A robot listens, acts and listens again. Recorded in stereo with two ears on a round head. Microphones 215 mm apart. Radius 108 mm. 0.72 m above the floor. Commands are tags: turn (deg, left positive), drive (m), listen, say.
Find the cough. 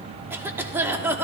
<turn deg="-30"/>
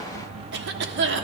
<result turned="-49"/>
<turn deg="-120"/>
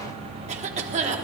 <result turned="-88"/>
<turn deg="-35"/>
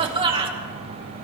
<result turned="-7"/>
<turn deg="-25"/>
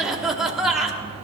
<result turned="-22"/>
<say>Facing the cough, 1 to 2 m away.</say>